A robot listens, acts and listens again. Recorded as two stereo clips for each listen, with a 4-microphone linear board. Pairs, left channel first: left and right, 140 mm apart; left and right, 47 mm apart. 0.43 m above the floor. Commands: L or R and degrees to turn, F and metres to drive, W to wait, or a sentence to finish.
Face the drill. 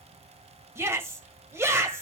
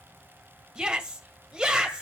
W
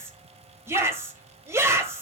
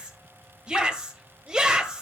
W
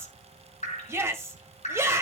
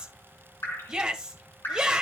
I can't make out a drill to turn to.